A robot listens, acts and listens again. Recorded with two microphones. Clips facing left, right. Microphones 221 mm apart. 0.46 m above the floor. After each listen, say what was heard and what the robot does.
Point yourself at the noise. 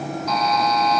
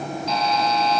The buzzer: about 30° right or 150° right. Turn 30° right.
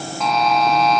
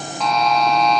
Facing the buzzer.